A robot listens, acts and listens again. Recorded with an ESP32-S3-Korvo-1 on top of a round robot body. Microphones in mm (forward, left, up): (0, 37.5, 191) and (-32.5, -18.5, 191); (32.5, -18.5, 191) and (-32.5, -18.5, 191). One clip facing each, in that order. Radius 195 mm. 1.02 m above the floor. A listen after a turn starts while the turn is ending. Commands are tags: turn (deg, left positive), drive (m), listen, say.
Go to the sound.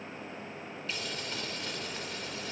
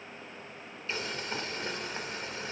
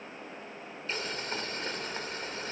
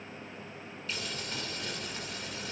<turn deg="-55"/>
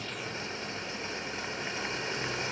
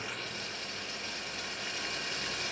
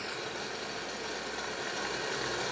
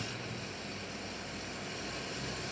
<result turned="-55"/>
<drive m="1.0"/>
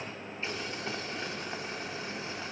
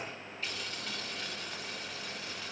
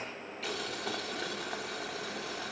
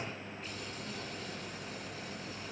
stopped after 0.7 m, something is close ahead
<say>Something is in my way. I am facing the boiling but have not reached it.</say>